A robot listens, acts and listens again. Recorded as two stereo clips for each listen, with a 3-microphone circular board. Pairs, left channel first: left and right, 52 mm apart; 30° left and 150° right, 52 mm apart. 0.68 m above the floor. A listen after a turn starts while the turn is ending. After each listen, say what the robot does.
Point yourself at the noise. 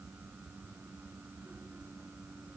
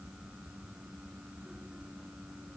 Keep listening.
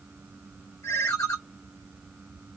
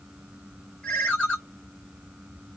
Turn 100° left.
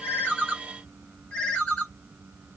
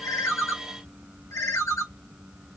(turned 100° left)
Turn 20° left.
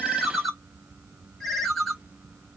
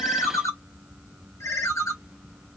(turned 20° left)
Facing the ringtone, 1 to 2 m away.